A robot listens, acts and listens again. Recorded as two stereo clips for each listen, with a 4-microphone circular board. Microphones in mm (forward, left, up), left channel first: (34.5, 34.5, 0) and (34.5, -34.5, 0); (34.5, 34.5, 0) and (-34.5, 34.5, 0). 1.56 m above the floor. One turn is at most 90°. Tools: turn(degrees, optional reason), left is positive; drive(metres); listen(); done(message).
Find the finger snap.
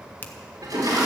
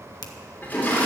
turn(degrees=25, reason="The finger snap: 25° left.")
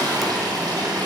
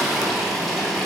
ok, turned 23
listen()
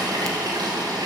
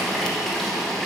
listen()
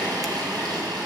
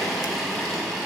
done("I heard a finger snap from this way, but can't make it out now.")